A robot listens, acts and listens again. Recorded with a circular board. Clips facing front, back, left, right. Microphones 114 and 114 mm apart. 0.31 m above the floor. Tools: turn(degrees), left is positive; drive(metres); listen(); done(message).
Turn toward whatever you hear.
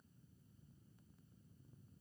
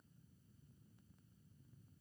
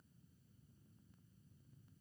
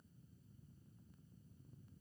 listen()
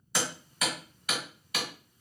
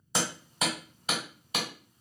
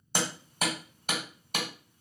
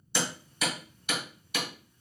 turn(degrees=120)
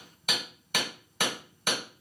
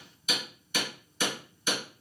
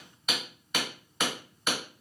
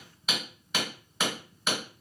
done("Found it: hammering, straight ahead, 1 to 2 m away.")